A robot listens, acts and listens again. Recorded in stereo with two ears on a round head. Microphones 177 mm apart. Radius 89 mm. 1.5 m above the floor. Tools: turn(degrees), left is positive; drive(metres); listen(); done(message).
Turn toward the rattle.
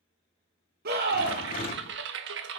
turn(degrees=45)
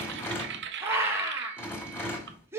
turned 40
turn(degrees=15)
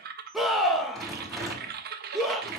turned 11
done("Facing the rattle.")